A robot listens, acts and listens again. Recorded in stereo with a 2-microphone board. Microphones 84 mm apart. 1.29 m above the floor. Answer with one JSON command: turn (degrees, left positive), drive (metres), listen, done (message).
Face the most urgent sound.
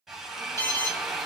{"turn": 40}
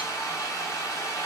{"listen": true}
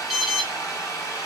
{"done": "Found it: an alarm, straight ahead."}